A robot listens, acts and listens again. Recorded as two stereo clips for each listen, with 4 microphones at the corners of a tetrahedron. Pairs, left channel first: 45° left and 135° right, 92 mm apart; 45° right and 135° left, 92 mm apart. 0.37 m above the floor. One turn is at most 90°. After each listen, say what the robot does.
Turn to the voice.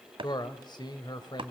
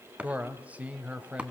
Turn 65° left.
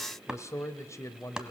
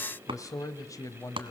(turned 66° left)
Facing the man speaking, 1 to 2 m away.